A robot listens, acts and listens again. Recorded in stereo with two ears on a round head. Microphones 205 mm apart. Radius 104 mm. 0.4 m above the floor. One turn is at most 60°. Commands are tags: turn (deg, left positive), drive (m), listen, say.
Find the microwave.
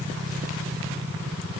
<listen/>
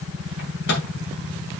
<turn deg="50"/>
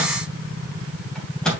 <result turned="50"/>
<say>Found it: a microwave, straight ahead.</say>